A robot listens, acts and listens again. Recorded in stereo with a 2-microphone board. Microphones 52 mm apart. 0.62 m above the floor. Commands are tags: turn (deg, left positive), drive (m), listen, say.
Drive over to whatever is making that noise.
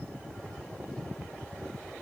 <listen/>
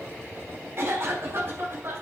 <turn deg="-50"/>
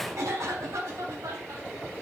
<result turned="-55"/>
<turn deg="-80"/>
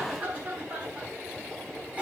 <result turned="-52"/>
<turn deg="-25"/>
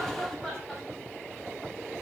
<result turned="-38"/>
<turn deg="10"/>
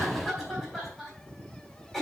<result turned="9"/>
<drive m="1.0"/>
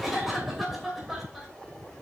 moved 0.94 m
<drive m="1.0"/>
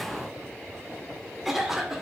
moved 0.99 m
<drive m="1.0"/>
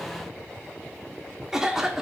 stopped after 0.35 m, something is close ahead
<turn deg="-10"/>
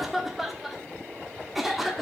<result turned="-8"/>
<say>Arrived at the cough, straight ahead.</say>